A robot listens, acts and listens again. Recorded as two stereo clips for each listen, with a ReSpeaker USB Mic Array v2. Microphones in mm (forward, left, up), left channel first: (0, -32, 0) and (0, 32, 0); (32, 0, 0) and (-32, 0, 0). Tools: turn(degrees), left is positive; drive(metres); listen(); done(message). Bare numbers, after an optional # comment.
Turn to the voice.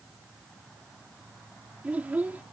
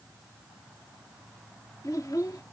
# The child speaking: 25° left.
turn(25)
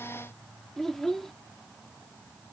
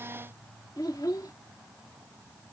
done("Found it: a child speaking, straight ahead.")